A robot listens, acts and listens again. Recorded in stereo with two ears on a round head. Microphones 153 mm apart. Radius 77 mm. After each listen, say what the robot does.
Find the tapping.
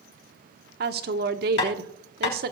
Turn 65° left.
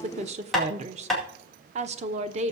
Facing the tapping.